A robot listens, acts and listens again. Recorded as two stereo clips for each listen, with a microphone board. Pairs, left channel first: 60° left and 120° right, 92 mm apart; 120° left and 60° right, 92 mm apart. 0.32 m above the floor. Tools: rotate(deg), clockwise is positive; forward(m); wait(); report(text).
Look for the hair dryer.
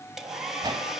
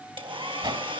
rotate(35)
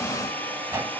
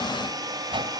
rotate(10)
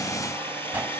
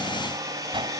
report("Facing the hair dryer.")